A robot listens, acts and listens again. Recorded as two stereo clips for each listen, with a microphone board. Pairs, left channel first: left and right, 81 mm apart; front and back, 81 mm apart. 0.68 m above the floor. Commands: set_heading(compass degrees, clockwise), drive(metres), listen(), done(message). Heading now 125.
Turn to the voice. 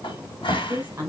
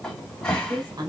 set_heading(280)
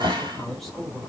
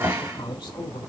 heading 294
done("Facing the woman speaking.")